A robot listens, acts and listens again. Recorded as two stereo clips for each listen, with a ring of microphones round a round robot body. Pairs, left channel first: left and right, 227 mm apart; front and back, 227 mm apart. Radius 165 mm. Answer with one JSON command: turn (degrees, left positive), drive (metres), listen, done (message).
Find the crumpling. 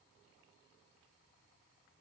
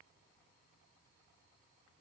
{"listen": true}
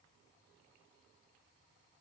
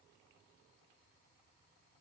{"listen": true}
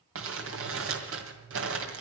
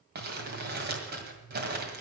{"turn": -125}
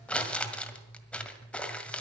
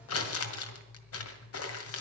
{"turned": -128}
{"done": "Found it: crumpling, straight ahead, 1 to 2 m away."}